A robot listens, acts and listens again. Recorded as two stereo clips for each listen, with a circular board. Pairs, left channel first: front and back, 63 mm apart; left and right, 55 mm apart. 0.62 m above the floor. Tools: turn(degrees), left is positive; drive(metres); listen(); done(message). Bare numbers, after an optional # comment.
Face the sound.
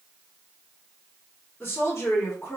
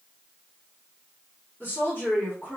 # The woman speaking: 35° left.
turn(35)
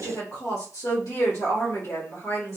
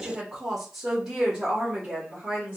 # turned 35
# The woman speaking is now 25° right.
turn(-25)
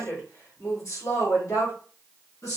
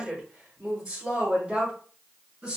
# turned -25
# The woman speaking is now 15° right.
turn(-15)
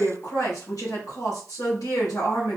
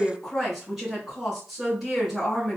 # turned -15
done("Found it: a woman speaking, straight ahead.")